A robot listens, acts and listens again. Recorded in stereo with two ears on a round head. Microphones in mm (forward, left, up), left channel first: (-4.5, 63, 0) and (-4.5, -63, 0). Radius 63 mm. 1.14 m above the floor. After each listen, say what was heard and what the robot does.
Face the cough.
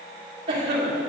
The cough: about 35° right or 145° right. Turn 35° right.
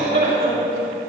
So it is at 110° right. Turn 110° right.
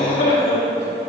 The cough is now 35° left. Turn 35° left.
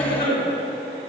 The cough is now 10° left. Turn 10° left.
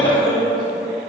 Facing the cough, 2 to 4 m away.